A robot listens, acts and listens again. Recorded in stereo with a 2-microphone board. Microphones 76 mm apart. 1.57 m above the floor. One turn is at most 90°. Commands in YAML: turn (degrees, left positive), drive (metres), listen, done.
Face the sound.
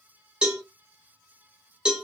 turn: -30
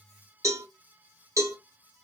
turn: -90
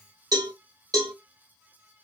turn: -60
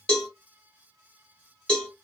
turn: 10
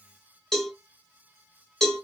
done: "Facing the cowbell."